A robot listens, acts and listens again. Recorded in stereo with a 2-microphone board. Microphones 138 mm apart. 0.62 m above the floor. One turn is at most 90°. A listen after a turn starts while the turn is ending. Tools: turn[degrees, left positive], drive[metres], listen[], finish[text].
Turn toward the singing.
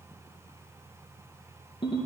Action: listen[]
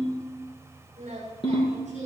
Thought: The singing: about 60° right or 120° right.
Action: turn[-60]
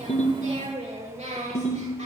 Thought: So it is at 60° right.
Action: turn[-60]
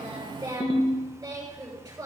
Thought: The singing is now 30° right.
Action: turn[-30]
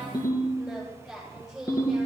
Action: finish[Facing the singing.]